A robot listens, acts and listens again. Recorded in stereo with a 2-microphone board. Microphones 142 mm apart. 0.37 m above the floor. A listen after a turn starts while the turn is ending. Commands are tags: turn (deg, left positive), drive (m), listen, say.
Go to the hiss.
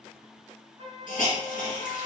<turn deg="75"/>
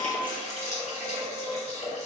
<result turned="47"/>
<turn deg="55"/>
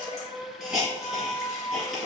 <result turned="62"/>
<drive m="1.0"/>
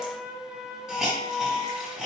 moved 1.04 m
<drive m="1.0"/>
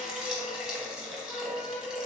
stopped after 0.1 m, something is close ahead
<turn deg="-10"/>
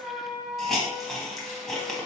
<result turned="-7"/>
<say>I am next to the hiss.</say>